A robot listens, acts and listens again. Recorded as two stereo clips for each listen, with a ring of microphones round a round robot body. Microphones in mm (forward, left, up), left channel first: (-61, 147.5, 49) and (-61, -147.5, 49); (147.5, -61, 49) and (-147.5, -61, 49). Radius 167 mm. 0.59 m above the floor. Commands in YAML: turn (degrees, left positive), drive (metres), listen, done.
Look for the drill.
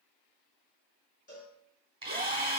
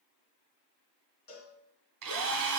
turn: -160
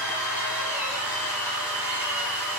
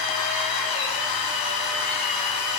done: "Found it: a drill, straight ahead, 1 to 2 m away."